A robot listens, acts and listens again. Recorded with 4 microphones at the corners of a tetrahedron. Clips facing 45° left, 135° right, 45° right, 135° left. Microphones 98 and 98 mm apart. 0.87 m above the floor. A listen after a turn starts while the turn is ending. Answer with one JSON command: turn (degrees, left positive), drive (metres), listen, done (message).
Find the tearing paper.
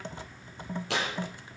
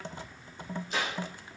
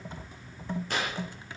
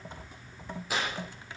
{"turn": 50}
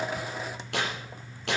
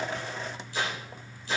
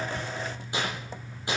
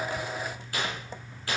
{"turn": 25}
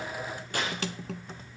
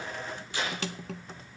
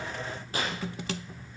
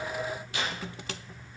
{"done": "Found it: tearing paper, straight ahead, over 4 m away."}